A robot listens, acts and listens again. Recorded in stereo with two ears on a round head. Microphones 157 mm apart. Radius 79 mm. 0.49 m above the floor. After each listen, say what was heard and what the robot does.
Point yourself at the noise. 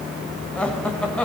Turn 30° left.
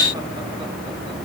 Keep listening.
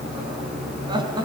So it is at 25° right. Turn 25° right.
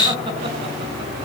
Keep listening.
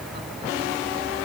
Keep listening.
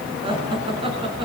The laughter is now 30° right. Turn 30° right.
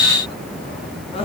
The laughter is now 30° left. Turn 30° left.
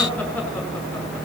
The laughter is now 10° left. Turn 10° left.
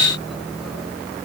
Keep listening.
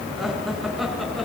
Facing the laughter.